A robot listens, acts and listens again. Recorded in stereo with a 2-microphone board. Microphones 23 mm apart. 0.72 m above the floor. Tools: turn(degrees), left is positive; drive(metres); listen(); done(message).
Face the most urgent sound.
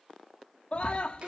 turn(degrees=40)
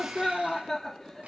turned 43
done("Found it: a scream, straight ahead.")